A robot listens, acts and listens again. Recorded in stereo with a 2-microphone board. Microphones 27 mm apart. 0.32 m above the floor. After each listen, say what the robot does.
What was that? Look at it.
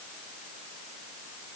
Keep listening.
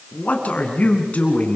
Turn 60° left.
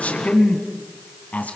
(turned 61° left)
Turn 60° left.
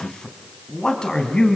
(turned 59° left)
Turn 25° left.
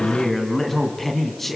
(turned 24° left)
Found it: a man speaking, straight ahead.